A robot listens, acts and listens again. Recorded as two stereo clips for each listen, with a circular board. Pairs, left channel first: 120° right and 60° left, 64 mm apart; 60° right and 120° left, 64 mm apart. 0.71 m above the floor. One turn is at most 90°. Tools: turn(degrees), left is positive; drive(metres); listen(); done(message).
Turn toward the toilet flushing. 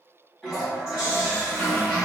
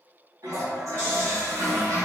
turn(degrees=90)
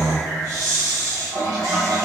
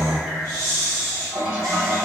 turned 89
turn(degrees=55)
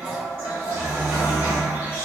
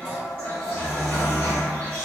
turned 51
done("Facing the toilet flushing.")